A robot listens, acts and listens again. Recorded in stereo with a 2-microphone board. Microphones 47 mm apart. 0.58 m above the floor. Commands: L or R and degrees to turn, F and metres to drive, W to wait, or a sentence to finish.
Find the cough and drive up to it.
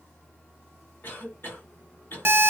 L45
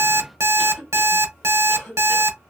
L10
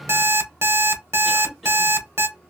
F1.0
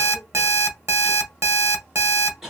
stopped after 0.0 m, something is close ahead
Blocked. The cough is further on, straight ahead.